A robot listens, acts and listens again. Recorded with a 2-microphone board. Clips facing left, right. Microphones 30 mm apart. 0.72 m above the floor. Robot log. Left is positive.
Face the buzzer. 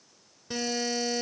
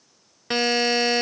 note: The buzzer: about 65° right or 115° right.
cmd yaw -65
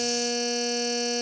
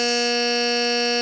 note: So it is at 50° right.
cmd yaw -50
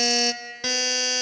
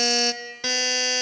end: Facing the buzzer.